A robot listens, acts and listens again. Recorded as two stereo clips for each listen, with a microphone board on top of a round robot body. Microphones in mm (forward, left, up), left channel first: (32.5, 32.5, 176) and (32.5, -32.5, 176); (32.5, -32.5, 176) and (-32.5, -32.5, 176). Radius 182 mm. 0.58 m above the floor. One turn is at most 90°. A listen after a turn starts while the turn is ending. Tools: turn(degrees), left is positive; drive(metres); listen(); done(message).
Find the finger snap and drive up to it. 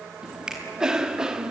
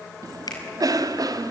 turn(degrees=-10)
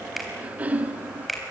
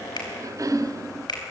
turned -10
drive(metres=1.0)
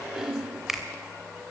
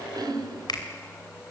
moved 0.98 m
drive(metres=1.0)
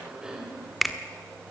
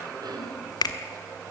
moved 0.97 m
drive(metres=1.0)
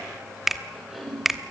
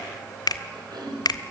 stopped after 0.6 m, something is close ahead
done("I am next to the finger snap.")